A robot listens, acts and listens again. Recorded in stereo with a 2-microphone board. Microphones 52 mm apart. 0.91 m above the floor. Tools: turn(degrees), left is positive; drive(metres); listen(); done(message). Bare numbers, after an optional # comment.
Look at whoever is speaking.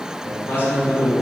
# The man speaking: about 35° left or 145° left.
turn(35)
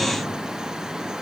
listen()
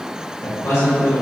# So it is at 105° left.
turn(105)
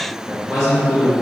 done("Found it: a man speaking, straight ahead.")